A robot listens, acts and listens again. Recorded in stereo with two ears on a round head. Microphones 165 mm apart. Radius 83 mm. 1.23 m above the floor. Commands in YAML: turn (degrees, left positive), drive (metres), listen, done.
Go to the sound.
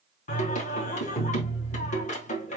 turn: 40
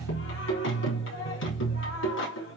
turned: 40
turn: 95
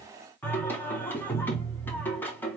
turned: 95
turn: 10
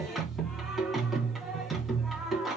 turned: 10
drive: 1.0
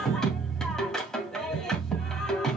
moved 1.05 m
drive: 1.0
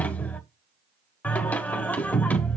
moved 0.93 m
turn: 10
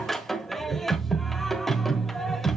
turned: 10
drive: 1.0
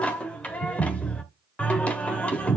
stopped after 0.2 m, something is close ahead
turn: 10
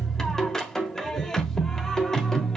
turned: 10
done: "I am next to the singing."